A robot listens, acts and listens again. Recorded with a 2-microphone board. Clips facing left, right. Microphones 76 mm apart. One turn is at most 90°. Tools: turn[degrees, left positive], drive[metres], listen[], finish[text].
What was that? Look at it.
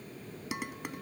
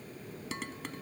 Action: turn[30]
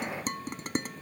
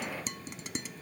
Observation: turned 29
Thought: So it is at 135° left.
Action: turn[90]
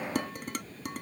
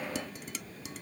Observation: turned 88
Thought: The dishes clattering is now 45° left.
Action: turn[45]
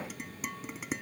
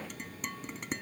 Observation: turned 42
Action: finish[Found it: dishes clattering, straight ahead.]